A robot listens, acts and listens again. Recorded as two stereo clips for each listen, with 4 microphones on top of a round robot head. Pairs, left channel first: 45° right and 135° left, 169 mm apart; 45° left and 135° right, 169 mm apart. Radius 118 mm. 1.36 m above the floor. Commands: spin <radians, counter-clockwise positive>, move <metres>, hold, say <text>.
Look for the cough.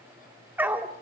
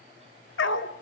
hold
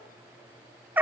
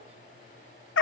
hold
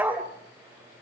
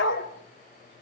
say I can't make out a cough to turn to.